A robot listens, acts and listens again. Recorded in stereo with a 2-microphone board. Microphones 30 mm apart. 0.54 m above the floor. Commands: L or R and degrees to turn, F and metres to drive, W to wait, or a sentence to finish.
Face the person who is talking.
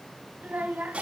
R60
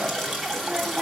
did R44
W
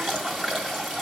W
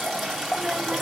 I heard a child speaking, but can't make it out now. It was about 15° right or 75° right.